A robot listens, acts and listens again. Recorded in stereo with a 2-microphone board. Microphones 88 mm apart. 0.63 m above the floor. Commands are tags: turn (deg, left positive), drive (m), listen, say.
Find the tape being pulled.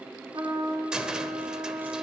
<listen/>
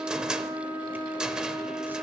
<listen/>
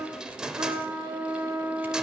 <say>I can't make out tape being pulled, only a cupboard door and a trumpet.</say>